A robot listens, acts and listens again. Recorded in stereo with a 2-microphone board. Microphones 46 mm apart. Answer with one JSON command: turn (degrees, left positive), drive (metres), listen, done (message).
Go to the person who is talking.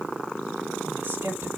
{"turn": -65}
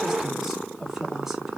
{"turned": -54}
{"listen": true}
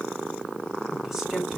{"listen": true}
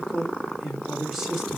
{"turn": -10}
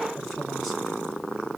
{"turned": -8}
{"listen": true}
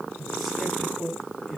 {"drive": 1.0}
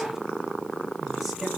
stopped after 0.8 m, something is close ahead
{"listen": true}
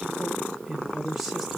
{"turn": -10}
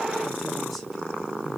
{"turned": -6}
{"listen": true}
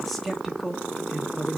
{"done": "Blocked. The man speaking is further on, straight ahead."}